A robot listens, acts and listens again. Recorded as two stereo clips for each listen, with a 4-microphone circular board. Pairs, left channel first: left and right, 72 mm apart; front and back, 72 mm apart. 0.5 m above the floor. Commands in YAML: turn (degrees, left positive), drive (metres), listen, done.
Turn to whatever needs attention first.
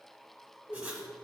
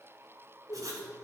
listen: true
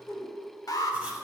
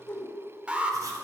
turn: 110
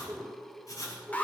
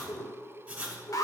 turn: 25
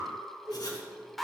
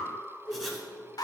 done: "Facing the alarm, under 1 m away."